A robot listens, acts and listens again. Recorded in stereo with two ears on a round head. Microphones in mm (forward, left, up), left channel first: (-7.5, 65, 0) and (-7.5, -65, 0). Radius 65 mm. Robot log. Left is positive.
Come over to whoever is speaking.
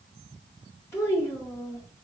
note: The child speaking: about 20° left or 160° left.
cmd yaw +20
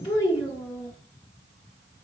note: So it is at 135° left.
cmd yaw +135
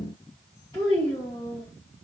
note: The child speaking is now 25° left.
cmd yaw +25
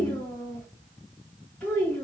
cmd fwd 1.0
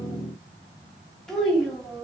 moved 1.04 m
cmd fwd 1.0
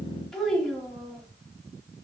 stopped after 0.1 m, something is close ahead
end: I am next to the child speaking.